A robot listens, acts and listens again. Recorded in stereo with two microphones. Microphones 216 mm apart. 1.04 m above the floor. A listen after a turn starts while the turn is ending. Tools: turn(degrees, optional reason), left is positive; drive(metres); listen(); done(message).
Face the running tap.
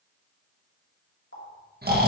turn(degrees=90)
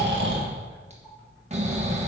listen()
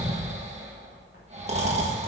listen()
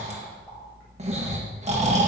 done("Facing where the running tap came from. I can't hear it now.")